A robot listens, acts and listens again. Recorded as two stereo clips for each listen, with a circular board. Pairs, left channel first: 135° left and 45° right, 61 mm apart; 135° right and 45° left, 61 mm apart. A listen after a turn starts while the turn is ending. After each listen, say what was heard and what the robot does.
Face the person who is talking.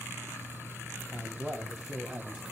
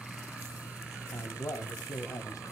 The man speaking: 125° right. Turn 125° right.
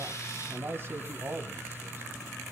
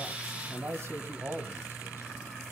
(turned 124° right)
Facing the man speaking, 2 to 4 m away.